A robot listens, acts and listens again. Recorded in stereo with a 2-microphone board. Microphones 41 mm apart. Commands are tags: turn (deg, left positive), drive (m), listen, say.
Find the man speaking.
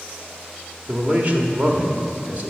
<turn deg="-35"/>
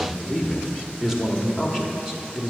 <say>Found it: a man speaking, straight ahead.</say>